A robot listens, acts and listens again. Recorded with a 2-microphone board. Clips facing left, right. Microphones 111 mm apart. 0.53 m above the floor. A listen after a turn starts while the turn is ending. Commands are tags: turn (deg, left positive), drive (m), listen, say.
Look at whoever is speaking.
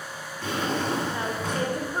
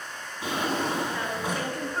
<turn deg="20"/>
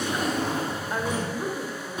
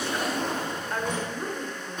<say>Facing the woman speaking, 1 to 2 m away.</say>